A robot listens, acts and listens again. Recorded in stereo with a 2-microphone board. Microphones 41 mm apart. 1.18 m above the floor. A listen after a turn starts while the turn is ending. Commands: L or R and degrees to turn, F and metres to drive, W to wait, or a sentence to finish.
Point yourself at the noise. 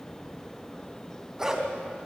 R15
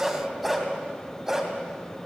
R30
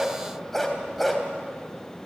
R30
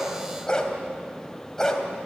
L15
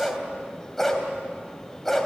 Facing the dog barking, 2 to 4 m away.